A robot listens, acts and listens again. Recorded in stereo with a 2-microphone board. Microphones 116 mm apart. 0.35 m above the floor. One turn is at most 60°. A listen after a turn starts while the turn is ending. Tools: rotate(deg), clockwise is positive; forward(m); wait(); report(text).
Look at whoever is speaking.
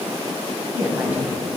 rotate(15)
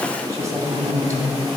rotate(60)
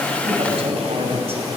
rotate(60)
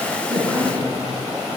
rotate(50)
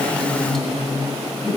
report("Facing the woman speaking, 1 to 2 m away.")